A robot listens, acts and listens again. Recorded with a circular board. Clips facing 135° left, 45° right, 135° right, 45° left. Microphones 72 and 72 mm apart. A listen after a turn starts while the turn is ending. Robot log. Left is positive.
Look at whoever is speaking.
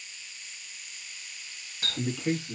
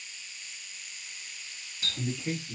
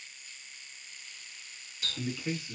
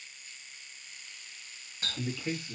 note: The man speaking: 140° left.
cmd yaw +140
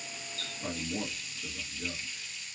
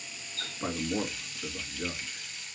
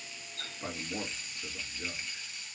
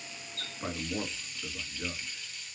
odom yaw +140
note: The man speaking is now 25° right.
cmd yaw -25
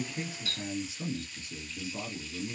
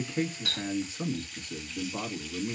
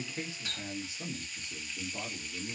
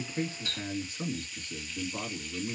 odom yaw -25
end: Found it: a man speaking, straight ahead.